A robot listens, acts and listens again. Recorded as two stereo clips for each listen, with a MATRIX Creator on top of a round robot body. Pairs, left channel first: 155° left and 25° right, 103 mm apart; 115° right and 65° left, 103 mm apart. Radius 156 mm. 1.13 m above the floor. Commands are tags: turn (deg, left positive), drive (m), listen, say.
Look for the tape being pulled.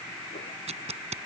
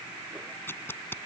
<turn deg="-45"/>
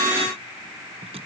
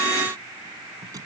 <turn deg="10"/>
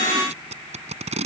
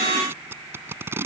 <say>Found it: tape being pulled, straight ahead.</say>